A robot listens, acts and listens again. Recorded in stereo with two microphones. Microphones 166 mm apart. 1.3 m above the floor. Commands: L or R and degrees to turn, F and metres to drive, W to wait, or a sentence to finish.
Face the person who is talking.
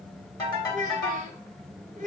R50
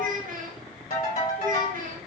R65
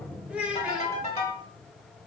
Facing the child speaking, under 1 m away.